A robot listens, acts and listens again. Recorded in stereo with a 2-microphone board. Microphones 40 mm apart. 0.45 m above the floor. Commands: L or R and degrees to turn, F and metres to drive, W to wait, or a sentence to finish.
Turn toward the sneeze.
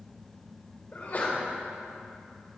L50
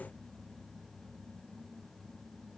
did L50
W
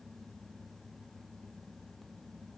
I heard a sneeze, but can't make it out now. It was about straight ahead or 80° left.